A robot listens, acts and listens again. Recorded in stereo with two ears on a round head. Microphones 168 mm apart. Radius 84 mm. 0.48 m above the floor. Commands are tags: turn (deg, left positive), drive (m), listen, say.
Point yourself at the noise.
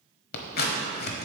<turn deg="55"/>
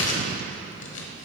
<turn deg="70"/>
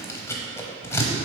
<turn deg="15"/>
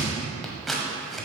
<say>Facing the scissors.</say>